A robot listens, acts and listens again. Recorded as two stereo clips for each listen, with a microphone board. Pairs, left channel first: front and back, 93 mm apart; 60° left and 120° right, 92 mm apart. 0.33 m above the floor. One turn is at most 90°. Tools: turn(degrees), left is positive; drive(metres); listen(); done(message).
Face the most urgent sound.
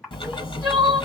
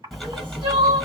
turn(degrees=-90)
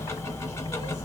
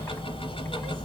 turn(degrees=-45)
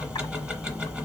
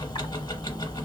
listen()
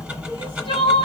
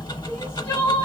done("Facing the crying, 2 to 4 m away.")